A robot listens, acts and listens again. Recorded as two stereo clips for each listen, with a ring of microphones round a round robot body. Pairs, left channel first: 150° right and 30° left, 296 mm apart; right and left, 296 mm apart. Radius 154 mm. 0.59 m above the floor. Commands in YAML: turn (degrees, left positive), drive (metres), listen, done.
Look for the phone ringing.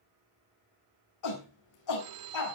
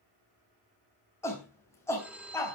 done: "Found it: a phone ringing, straight ahead, 1 to 2 m away."